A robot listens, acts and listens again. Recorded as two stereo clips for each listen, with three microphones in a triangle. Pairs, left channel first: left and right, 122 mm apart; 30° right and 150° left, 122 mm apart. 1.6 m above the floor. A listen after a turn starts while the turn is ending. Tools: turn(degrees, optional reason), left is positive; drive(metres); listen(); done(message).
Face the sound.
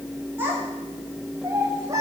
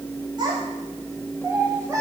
turn(degrees=-150, reason="The child speaking: 150° right.")
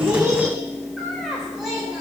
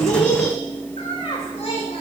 done("Facing the child speaking.")